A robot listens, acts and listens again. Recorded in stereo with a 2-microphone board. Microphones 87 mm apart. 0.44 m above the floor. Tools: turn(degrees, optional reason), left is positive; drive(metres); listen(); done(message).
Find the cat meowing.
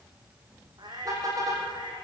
turn(degrees=-55, reason="The cat meowing: about 55° right or 125° right.")
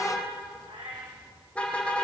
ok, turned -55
turn(degrees=-70, reason="So it is at 70° right.")
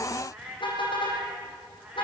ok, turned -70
turn(degrees=-15, reason="The cat meowing is now 15° right.")
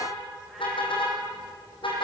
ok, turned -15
listen()
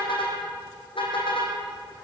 listen()
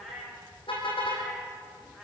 done("Found it: a cat meowing, straight ahead, over 4 m away.")